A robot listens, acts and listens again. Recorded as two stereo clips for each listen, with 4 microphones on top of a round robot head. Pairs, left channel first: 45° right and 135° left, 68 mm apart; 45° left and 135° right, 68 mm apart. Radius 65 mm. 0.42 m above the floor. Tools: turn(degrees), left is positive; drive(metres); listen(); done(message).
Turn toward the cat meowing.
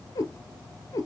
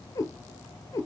done("Found it: a cat meowing, straight ahead.")